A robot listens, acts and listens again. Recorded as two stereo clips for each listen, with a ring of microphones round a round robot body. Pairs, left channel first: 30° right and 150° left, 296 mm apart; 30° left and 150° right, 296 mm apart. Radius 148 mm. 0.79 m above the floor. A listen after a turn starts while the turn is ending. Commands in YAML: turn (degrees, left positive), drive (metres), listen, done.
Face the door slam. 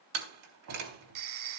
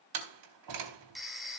turn: -170
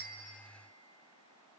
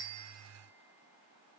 done: "Facing where the door slam came from. I can't hear it now."